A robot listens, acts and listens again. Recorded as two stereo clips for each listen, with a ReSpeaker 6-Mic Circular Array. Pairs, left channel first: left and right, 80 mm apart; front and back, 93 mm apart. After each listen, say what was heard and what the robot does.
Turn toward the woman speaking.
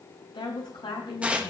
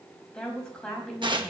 The woman speaking: 80° left. Turn 80° left.
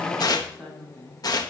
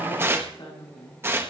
The woman speaking is now 10° left. Turn 10° left.
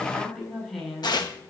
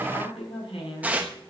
Found it: a woman speaking, straight ahead, over 4 m away.